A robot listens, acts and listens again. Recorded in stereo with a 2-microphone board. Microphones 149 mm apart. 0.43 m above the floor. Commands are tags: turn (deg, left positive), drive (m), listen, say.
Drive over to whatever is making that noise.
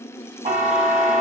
<turn deg="-55"/>
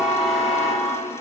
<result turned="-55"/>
<drive m="1.0"/>
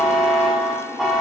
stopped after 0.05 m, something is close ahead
<say>Something is in my way. I am facing the buzzer but have not reached it.</say>